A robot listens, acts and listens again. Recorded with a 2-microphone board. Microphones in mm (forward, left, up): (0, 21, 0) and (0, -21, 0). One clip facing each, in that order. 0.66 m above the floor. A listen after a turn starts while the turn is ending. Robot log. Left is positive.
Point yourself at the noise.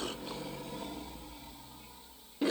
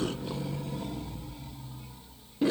cmd idle
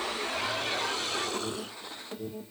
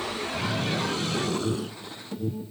note: The alarm: about 25° left or 155° left.
cmd yaw +25
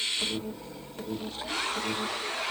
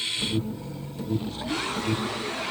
note: So it is at 120° left.
cmd yaw +120
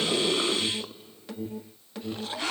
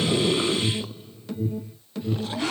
note: The alarm is now 15° left.
cmd yaw +15
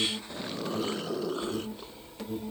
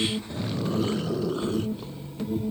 end: Found it: an alarm, straight ahead.